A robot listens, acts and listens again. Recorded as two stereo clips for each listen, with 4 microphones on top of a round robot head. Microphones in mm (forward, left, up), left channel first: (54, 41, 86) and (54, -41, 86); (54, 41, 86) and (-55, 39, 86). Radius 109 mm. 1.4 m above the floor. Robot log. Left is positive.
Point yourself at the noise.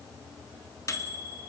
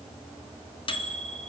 note: The microwave: 40° left.
cmd yaw +40
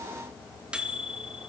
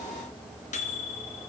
note: The microwave is now 10° right.
cmd yaw -10
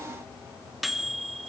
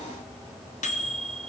end: Facing the microwave.